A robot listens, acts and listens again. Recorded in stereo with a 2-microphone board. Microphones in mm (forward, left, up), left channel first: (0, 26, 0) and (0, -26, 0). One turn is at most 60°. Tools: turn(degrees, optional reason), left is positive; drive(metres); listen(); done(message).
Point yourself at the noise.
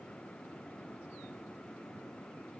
listen()
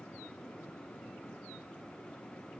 listen()
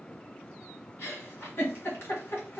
turn(degrees=45, reason="The giggle: about 45° left or 135° left.")
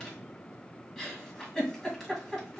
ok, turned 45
done("Found it: a giggle, straight ahead.")